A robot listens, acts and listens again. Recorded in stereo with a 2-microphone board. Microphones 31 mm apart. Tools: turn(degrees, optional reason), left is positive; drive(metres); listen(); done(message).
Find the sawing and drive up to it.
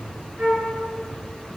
listen()
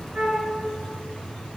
listen()
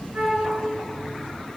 done("I can't make out sawing, only a flute.")